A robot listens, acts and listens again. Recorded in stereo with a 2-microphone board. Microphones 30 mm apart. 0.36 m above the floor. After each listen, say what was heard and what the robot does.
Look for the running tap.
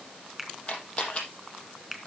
Keep listening.
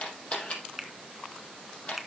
Keep listening.
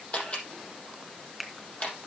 I can't make out a running tap, only a finger snap and a camera shutter.